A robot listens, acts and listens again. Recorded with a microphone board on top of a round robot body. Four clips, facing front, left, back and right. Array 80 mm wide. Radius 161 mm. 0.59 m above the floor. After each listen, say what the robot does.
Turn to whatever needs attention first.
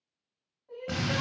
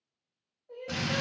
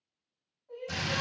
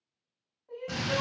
Turn 70° right.
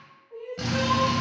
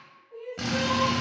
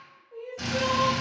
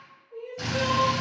Facing the crying, 1 to 2 m away.